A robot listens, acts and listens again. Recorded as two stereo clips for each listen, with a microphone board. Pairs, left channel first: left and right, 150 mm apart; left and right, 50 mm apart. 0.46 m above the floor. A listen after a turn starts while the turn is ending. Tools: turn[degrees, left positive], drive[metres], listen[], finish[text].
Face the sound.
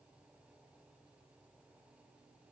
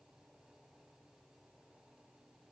Action: listen[]
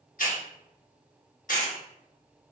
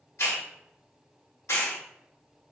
Thought: The hiss: about 65° left or 115° left.
Action: turn[65]
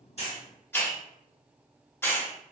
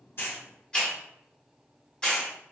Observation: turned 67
Thought: So it is at 15° left.
Action: turn[15]
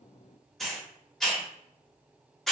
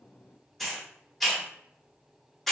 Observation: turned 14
Action: finish[Found it: a hiss, straight ahead, under 1 m away.]